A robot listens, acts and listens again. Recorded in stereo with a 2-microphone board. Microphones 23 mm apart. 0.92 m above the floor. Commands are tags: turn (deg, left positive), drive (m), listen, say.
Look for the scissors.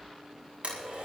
<listen/>
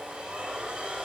<listen/>
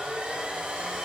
<say>I can't make out scissors to turn to.</say>